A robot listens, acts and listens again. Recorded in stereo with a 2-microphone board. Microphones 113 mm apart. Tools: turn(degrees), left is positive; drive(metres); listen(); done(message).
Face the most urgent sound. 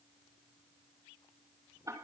listen()
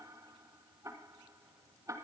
listen()
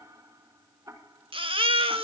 turn(degrees=-50)
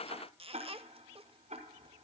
listen()
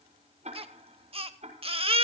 turn(degrees=-70)
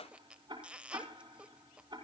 listen()
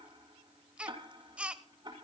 turn(degrees=-10)
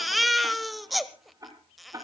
done("Found it: a baby crying, straight ahead, 1 to 2 m away.")